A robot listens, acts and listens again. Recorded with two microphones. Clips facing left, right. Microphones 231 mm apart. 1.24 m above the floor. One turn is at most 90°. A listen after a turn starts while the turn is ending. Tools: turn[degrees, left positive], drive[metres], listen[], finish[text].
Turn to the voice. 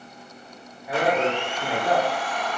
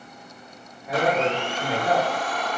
Thought: The man speaking: about 15° left or 165° left.
Action: turn[15]
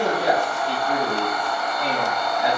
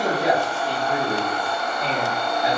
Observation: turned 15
Thought: So it is at 115° left.
Action: turn[90]
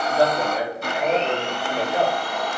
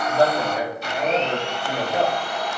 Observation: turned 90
Thought: The man speaking is now 15° right.
Action: turn[-15]
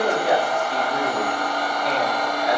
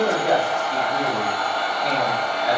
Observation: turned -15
Action: finish[Facing the man speaking, 2 to 4 m away.]